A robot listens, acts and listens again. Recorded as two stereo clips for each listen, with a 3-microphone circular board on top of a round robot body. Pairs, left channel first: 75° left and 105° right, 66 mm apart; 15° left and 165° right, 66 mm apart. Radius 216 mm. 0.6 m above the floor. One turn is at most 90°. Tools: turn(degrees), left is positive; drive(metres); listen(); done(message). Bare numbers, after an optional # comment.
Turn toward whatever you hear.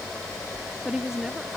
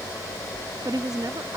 # The woman speaking: 170° left.
turn(90)
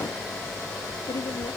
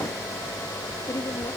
# Nothing new. It was at 80° left.
turn(80)
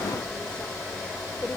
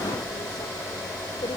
listen()
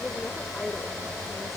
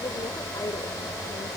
done("I heard a woman speaking from this way, but can't make it out now.")